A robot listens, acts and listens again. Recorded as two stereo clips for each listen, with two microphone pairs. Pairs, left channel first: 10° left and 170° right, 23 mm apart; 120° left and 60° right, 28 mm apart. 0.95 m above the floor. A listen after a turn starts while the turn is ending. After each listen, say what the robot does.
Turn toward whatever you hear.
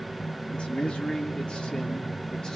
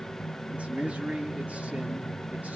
Turn 35° right.
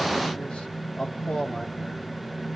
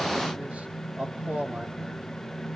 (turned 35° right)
Turn 35° right.
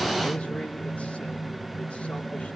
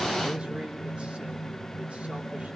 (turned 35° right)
Keep listening.
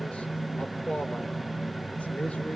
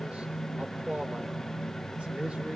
Turn 15° right.
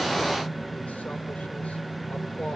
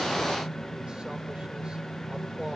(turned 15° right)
Keep listening.
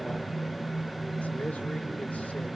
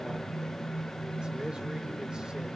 Facing the man speaking, over 4 m away.